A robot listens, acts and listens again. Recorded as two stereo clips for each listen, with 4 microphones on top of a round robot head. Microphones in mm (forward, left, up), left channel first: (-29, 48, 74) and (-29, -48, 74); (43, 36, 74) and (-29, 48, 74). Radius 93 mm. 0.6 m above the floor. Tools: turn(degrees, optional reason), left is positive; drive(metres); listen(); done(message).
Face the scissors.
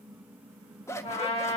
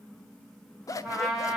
turn(degrees=30, reason="The scissors: 30° left.")
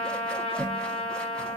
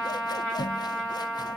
turn(degrees=10, reason="The scissors is now 10° left.")
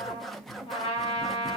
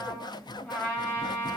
done("Found it: scissors, straight ahead, under 1 m away.")